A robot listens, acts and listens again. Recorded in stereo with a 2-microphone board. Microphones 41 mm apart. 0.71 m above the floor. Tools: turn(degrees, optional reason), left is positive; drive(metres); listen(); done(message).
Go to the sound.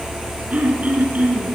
turn(degrees=-30, reason="The throat clearing: about 30° right or 150° right.")
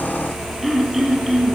drive(metres=1.0)
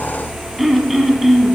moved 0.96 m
drive(metres=1.0)
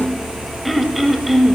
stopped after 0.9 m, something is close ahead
done("Arrived at the throat clearing, straight ahead.")